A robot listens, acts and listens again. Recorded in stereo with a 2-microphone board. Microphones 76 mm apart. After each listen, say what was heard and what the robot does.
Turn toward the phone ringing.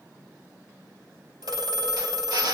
The phone ringing: about 70° right or 110° right. Turn 70° right.
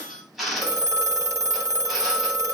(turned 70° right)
So it is at 40° right. Turn 40° right.
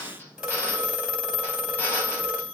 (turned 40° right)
Found it: a phone ringing, straight ahead, 2 to 4 m away.